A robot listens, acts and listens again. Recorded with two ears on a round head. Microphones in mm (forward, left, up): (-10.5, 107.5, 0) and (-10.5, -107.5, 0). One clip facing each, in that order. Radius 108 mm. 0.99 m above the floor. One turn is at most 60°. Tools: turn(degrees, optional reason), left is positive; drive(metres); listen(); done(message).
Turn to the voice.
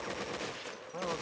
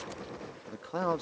turn(degrees=-60, reason="The man speaking: about 75° right or 105° right.")
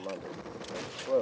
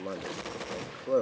turn(degrees=-20, reason="So it is at 20° right.")
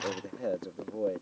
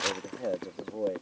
done("Found it: a man speaking, straight ahead.")